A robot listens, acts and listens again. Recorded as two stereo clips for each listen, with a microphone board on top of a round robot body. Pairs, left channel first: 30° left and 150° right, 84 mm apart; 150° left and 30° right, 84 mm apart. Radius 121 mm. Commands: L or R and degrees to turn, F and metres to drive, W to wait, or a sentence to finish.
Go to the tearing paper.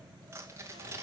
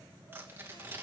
R95
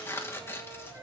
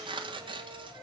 R30
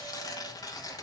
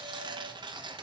F1.0
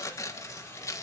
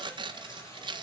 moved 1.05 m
R15
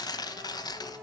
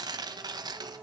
F1.0
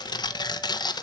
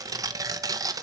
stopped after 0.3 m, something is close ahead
L10
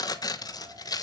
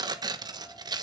Arrived at the tearing paper, straight ahead.